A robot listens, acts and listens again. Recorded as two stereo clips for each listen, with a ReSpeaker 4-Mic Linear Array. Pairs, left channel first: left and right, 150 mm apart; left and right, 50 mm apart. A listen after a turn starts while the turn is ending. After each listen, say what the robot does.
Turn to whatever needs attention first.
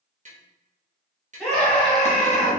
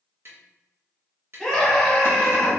Turn 30° left.
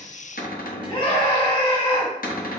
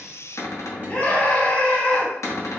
Turn 145° left.
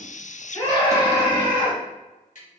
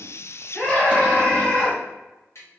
Turn 25° left.
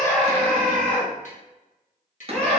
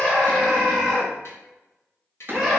Facing the scream, 1 to 2 m away.